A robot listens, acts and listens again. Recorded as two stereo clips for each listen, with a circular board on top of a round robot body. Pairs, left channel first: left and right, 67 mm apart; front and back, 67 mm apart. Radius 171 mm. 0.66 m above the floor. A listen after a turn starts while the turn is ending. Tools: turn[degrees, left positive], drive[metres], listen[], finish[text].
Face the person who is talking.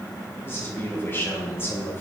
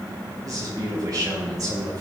Thought: The man speaking: 150° left.
Action: turn[150]
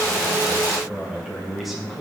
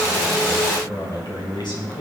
Action: finish[Found it: a man speaking, straight ahead, over 4 m away.]